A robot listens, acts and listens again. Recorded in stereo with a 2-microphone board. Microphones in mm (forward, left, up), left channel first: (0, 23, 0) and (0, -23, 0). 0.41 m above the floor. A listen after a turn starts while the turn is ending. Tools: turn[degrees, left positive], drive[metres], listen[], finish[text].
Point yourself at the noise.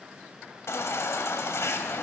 Thought: The baby crying: about 70° left or 110° left.
Action: turn[70]
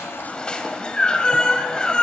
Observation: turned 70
Thought: So it is at 20° left.
Action: turn[20]
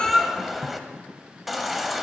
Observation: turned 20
Action: finish[Facing the baby crying, 1 to 2 m away.]